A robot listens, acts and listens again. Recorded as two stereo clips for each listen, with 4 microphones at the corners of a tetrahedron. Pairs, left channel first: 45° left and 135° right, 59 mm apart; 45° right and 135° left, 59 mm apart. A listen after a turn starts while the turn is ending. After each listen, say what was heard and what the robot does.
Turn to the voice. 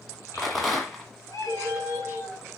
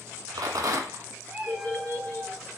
The child speaking: 20° left. Turn 20° left.
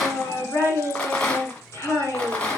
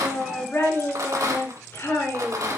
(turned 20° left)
Facing the child speaking.